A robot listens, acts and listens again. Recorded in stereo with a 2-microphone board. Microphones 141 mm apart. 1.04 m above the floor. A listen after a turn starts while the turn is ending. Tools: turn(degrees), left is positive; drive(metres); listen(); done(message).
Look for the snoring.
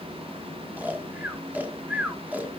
turn(degrees=-30)
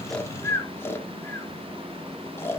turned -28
turn(degrees=20)
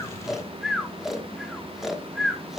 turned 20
done("Found it: snoring, straight ahead, 1 to 2 m away.")